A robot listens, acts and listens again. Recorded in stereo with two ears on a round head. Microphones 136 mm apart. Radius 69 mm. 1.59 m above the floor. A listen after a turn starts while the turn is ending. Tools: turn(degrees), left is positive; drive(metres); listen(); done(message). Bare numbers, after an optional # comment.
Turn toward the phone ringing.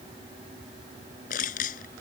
listen()
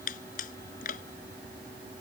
listen()
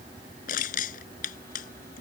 done("I can't make out a phone ringing, only crushing.")